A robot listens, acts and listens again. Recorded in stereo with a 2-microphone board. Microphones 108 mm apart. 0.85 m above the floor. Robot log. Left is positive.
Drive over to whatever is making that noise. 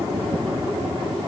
cmd idle
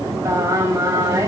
note: The singing: about 30° right or 150° right.
cmd yaw -30
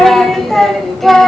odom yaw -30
cmd fwd 1.0
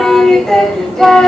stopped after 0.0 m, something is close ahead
end: Blocked. The singing is further on, straight ahead.